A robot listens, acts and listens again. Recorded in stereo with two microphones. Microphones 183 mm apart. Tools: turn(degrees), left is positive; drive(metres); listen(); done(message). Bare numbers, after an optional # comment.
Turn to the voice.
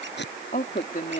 # The woman speaking: about 50° left or 130° left.
turn(50)
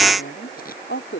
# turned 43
# So it is at 90° left.
turn(90)
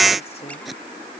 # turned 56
# Nothing new. It was at 30° left.
turn(30)
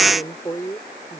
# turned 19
# The woman speaking is now 15° left.
turn(15)
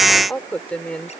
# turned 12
done("Found it: a woman speaking, straight ahead.")